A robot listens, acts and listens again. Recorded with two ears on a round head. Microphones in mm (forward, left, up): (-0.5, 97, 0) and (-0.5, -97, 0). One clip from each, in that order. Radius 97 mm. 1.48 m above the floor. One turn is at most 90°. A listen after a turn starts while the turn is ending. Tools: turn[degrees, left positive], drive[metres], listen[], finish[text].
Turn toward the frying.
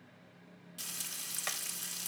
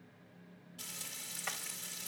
Thought: The frying: about 70° left or 110° left.
Action: turn[70]
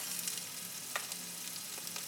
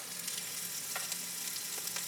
Action: finish[Found it: frying, straight ahead.]